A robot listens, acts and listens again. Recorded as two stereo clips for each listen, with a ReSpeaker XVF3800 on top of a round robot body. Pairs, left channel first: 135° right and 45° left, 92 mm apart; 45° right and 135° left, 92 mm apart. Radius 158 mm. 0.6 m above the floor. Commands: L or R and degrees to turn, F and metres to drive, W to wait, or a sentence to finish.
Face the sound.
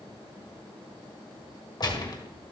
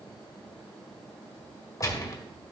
R100
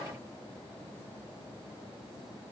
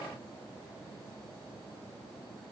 I heard a gunshot from this way, but can't make it out now.